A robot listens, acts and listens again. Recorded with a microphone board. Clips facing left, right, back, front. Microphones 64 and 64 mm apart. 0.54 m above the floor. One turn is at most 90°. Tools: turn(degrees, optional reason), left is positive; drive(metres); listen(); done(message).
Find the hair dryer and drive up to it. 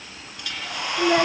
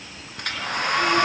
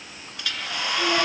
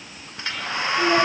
turn(degrees=-60, reason="The hair dryer: 60° right.")
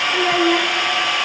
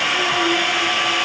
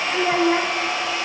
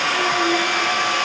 drive(metres=1.0)
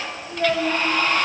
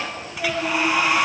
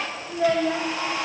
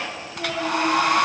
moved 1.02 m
turn(degrees=-10, reason="The hair dryer is now 10° right.")
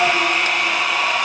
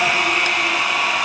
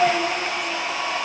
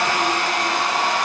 drive(metres=1.0)
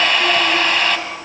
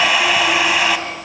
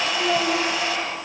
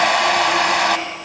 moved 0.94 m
turn(degrees=-10, reason="The hair dryer is now 10° right.")
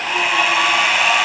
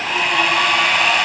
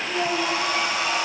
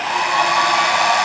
drive(metres=1.0)
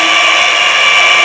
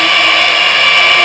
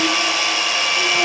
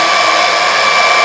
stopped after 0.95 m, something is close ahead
done("I am next to the hair dryer.")